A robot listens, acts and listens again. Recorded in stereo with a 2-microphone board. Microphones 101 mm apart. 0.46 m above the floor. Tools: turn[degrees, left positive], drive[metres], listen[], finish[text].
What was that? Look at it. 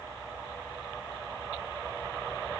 Action: listen[]
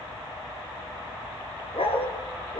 Thought: The dog barking: about 75° left or 105° left.
Action: turn[75]
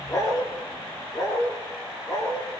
Thought: So it is at 35° left.
Action: turn[35]
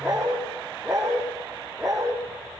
Action: finish[Found it: a dog barking, straight ahead.]